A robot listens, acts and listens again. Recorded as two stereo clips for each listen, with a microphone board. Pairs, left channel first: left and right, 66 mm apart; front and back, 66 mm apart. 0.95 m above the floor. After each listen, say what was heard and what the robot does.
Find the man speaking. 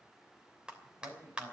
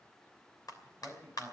The man speaking: 70° right. Turn 70° right.
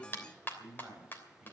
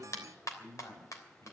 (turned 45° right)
The man speaking is now 20° right. Turn 20° right.
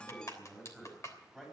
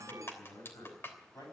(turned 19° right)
Facing the man speaking.